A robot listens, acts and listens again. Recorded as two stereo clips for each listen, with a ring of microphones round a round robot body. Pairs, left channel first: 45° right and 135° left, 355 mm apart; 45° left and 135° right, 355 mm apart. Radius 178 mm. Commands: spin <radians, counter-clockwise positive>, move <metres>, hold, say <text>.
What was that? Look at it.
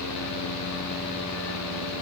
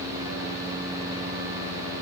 hold
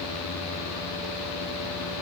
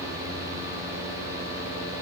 hold
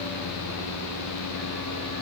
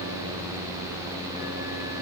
say I can't make out anything.